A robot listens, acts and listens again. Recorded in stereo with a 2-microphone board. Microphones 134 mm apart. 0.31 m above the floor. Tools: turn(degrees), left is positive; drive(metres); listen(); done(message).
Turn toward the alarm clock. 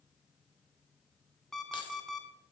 turn(degrees=30)
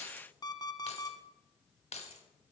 turn(degrees=145)
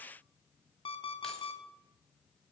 turn(degrees=45)
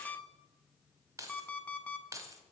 turn(degrees=10)
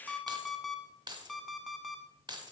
done("Found it: an alarm clock, straight ahead.")